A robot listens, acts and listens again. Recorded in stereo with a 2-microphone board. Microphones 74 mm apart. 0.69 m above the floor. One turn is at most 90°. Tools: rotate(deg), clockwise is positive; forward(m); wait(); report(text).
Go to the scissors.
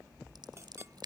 rotate(75)
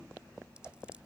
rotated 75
rotate(15)
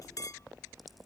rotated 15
wait()
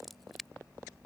forward(1.0)
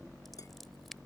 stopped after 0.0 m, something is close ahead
report("Blocked. The scissors is further on, straight ahead.")